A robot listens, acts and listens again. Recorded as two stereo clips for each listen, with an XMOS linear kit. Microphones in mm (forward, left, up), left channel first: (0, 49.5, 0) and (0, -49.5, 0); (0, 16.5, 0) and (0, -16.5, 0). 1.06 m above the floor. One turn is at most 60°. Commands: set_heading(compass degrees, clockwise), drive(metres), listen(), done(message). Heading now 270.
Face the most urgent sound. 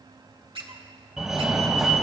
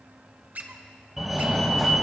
set_heading(300)
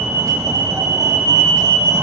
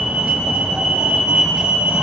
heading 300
set_heading(0)
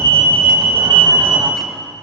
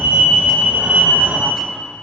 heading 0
set_heading(60)
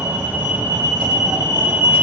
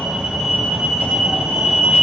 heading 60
set_heading(85)
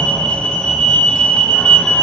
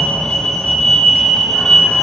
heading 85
set_heading(75)
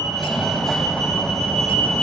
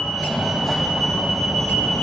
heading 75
done("Facing the fire alarm.")